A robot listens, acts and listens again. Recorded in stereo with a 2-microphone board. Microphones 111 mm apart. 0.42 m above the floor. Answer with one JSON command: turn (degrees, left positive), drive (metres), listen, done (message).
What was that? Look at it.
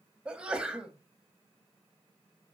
{"turn": -30}
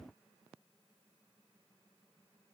{"listen": true}
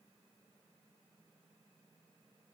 {"done": "I heard a sneeze, but can't make it out now. It was about 20° left or 140° right."}